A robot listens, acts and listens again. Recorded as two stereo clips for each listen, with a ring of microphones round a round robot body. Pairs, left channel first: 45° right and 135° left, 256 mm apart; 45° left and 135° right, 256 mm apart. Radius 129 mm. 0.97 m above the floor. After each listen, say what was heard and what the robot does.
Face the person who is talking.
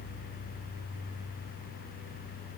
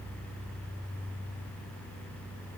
Keep listening.
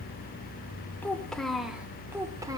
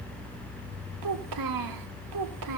The child speaking: 150° right. Turn 150° right.
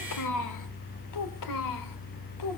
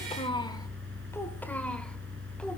The child speaking is now 40° right. Turn 40° right.
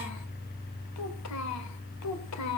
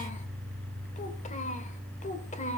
The child speaking is now 20° right. Turn 20° right.
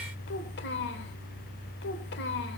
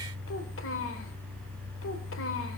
Facing the child speaking.